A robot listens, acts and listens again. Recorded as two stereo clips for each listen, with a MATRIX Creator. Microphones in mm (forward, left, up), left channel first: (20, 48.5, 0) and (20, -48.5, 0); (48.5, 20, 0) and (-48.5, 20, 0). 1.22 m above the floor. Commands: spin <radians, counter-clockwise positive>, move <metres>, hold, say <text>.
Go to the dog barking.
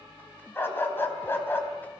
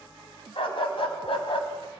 spin 0.35
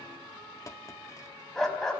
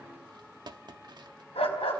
move 1.0
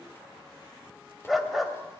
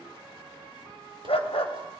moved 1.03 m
move 1.0
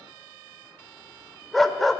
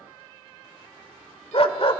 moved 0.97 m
move 1.0
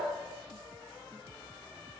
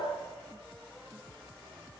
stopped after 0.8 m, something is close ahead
hold
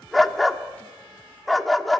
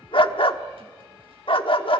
say Arrived at the dog barking, straight ahead.